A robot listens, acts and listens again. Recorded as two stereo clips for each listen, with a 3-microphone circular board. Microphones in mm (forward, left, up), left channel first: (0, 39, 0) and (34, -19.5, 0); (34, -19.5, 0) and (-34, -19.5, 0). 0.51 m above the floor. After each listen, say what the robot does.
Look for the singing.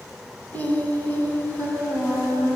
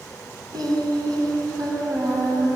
Turn 175° left.
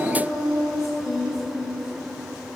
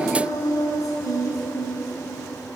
Turn 25° left.
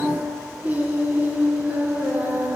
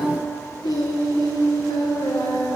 Facing the singing.